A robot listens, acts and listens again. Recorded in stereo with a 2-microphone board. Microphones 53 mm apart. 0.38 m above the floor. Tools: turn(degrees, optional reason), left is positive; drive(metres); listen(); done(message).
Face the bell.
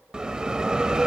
turn(degrees=-15, reason="The bell: about 15° right or 165° right.")
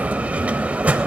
turn(degrees=-150, reason="So it is at 150° right.")
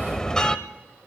turn(degrees=15, reason="The bell is now 15° left.")
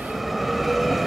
done("Found it: a bell, straight ahead, under 1 m away.")